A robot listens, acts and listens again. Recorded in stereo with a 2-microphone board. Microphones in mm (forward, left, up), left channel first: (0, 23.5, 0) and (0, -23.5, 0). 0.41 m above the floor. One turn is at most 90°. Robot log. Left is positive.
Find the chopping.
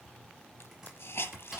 cmd yaw -30
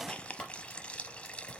note: So it is at 20° left.
cmd yaw +20
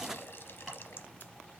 cmd idle
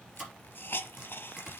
end: Facing the chopping, 2 to 4 m away.